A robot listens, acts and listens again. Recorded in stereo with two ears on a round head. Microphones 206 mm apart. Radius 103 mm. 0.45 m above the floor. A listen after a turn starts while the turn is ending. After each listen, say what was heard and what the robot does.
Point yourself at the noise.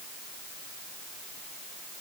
Keep listening.
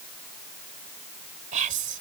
The whispering: about 35° right or 145° right. Turn 35° right.
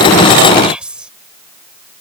Found it: whispering, straight ahead.